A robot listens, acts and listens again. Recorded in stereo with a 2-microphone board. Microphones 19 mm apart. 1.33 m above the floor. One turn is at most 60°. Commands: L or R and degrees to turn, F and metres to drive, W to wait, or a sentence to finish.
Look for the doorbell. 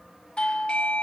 L60
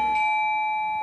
L40
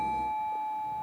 L15
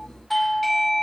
Found it: a doorbell, straight ahead, 1 to 2 m away.